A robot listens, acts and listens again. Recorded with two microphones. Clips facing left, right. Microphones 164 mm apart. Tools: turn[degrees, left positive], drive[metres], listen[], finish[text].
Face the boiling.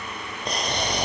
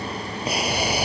Action: turn[-30]
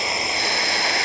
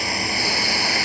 Thought: So it is at 20° left.
Action: turn[20]
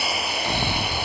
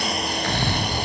Action: finish[Found it: boiling, straight ahead.]